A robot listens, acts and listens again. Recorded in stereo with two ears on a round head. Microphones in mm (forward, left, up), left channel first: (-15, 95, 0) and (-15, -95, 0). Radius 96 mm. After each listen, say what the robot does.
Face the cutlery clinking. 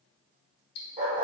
Keep listening.
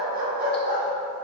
Keep listening.
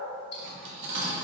Turn 60° right.
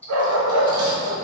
Keep listening.
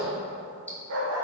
Keep listening.
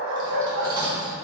Turn 25° right.
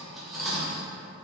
Facing the cutlery clinking.